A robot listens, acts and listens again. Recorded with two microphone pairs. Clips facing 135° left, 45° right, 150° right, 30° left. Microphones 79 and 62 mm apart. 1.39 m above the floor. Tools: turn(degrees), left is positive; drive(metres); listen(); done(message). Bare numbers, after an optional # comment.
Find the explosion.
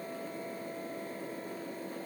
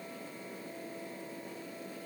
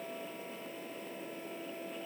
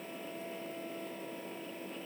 listen()
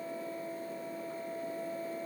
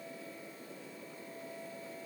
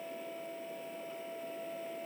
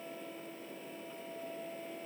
listen()
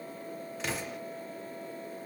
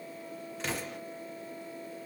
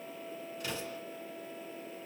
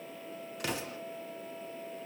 # The explosion: 40° left.
turn(40)
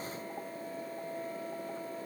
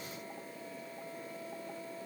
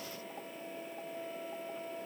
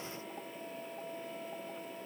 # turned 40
done("Facing where the explosion came from. I can't hear it now.")